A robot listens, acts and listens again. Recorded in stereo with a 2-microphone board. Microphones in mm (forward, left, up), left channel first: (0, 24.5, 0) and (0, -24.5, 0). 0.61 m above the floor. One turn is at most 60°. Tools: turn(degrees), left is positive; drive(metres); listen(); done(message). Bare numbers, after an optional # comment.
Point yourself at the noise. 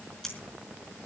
turn(30)
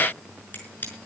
# So it is at 145° left.
turn(60)
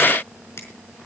# The scissors is now 75° left.
turn(60)
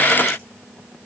# Nothing new. It was at 15° left.
turn(15)
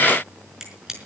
# The scissors is now 10° right.
turn(-10)
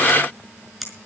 done("Found it: scissors, straight ahead.")